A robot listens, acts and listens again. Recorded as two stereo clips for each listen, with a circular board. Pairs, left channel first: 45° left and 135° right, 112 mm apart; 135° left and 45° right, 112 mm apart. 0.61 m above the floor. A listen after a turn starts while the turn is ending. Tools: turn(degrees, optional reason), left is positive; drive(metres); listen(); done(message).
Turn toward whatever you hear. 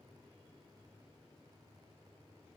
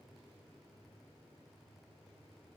listen()
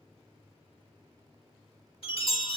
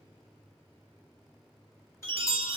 turn(degrees=70, reason="The chime: 70° left.")
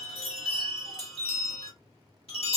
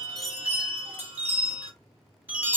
turn(degrees=25, reason="The chime is now 25° left.")
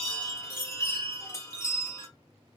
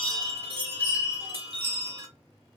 turn(degrees=-20, reason="The chime is now 20° right.")
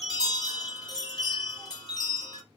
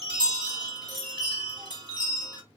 done("Facing the chime.")